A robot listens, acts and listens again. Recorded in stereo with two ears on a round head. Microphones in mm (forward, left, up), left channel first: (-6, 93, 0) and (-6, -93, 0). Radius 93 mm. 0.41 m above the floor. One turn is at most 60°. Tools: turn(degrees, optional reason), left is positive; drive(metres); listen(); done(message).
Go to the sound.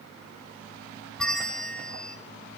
turn(degrees=30)
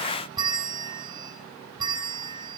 turn(degrees=-25, reason="So it is at 25° right.")
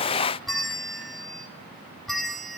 drive(metres=1.0)
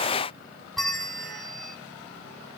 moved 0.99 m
drive(metres=1.0)
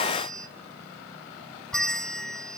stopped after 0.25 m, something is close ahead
done("Arrived at the bell, straight ahead.")